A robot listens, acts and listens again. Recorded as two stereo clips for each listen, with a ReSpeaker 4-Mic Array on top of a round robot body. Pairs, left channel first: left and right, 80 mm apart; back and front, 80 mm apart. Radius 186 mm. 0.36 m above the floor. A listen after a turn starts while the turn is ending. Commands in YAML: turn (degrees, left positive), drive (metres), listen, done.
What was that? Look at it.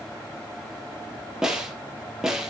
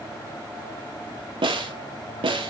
done: "Facing the snare drum."